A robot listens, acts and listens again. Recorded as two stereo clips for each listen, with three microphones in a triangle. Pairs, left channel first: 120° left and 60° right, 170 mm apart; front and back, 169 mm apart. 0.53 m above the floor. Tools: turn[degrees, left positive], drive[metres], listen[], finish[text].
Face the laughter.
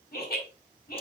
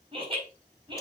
Thought: The laughter: 120° left.
Action: turn[120]
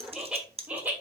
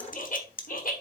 Thought: The laughter is now 15° left.
Action: turn[15]
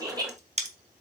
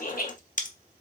Action: finish[Facing the laughter.]